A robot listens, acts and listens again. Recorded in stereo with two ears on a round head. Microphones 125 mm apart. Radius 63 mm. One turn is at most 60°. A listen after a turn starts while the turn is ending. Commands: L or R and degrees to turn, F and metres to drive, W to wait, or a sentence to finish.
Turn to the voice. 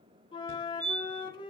W
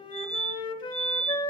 W
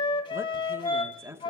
R20
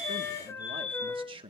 R60
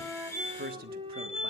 R60
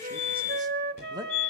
R25
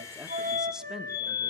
W
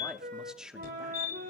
Found it: a man speaking, straight ahead, 1 to 2 m away.